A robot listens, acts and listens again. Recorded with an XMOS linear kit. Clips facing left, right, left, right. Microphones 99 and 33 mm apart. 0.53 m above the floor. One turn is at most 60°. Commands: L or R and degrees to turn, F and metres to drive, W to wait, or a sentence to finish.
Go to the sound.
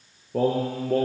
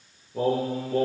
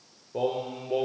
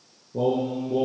L60
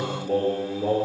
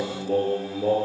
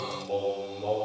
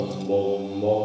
F1.0
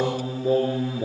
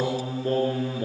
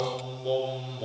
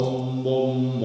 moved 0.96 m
F1.0
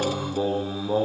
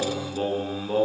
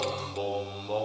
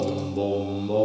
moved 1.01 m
L10
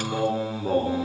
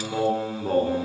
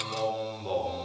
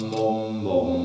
F1.0
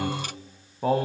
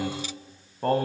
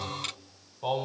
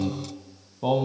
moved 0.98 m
F1.0
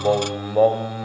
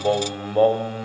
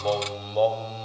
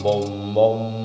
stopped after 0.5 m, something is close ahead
I am next to the singing.